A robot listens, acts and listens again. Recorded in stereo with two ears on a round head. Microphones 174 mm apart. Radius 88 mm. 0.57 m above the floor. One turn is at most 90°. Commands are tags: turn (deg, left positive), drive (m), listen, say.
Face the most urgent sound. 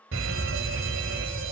<turn deg="-70"/>
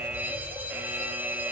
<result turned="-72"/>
<turn deg="-10"/>
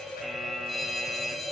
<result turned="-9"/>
<say>Facing the fire alarm.</say>